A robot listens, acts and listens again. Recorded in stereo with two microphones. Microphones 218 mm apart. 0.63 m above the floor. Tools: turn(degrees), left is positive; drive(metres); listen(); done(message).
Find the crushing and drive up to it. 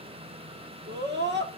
listen()
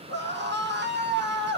listen()
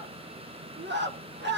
done("I can't make out crushing, only a scream.")